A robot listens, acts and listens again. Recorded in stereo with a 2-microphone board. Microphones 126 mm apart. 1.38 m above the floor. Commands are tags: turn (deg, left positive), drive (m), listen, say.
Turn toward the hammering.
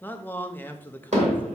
<turn deg="-70"/>
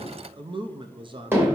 <turn deg="-20"/>
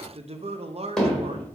<say>Found it: hammering, straight ahead, 2 to 4 m away.</say>